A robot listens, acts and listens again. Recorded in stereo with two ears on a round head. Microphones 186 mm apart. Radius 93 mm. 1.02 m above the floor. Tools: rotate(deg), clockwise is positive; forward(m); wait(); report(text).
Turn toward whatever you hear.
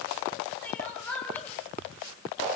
rotate(-30)
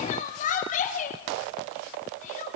rotate(-140)
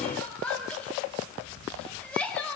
report("Found it: crying, straight ahead.")